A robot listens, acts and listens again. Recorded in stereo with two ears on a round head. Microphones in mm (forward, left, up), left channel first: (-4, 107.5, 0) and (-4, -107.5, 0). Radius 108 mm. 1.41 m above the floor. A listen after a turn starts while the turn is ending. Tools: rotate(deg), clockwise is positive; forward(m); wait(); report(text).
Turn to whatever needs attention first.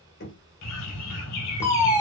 rotate(-30)
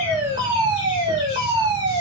rotate(20)
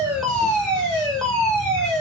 report("Found it: a fire alarm, straight ahead.")